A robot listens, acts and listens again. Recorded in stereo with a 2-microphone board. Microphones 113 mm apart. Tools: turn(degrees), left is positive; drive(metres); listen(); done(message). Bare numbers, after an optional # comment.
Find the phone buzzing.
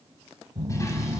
# The phone buzzing: about 30° right or 150° right.
turn(-30)
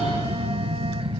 # So it is at 115° right.
turn(-115)
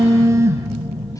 # The phone buzzing is now 25° right.
turn(-25)
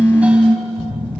# The phone buzzing is now 15° left.
turn(15)
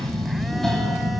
done("Found it: a phone buzzing, straight ahead, 1 to 2 m away.")